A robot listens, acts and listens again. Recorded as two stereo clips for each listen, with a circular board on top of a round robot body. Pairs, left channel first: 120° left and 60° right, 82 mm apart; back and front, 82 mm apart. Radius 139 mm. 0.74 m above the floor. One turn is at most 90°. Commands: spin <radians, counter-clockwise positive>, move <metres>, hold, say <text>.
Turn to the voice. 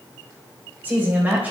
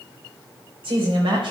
spin 0.17
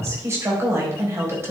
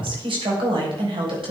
say Facing the woman speaking.